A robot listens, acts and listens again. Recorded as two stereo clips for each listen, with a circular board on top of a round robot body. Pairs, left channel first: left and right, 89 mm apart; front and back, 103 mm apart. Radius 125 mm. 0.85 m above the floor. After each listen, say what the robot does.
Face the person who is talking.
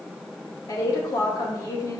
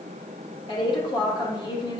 Turn 45° left.
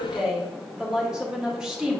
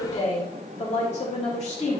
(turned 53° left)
Turn 10° right.
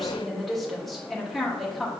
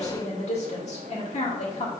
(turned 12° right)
Facing the woman speaking, 2 to 4 m away.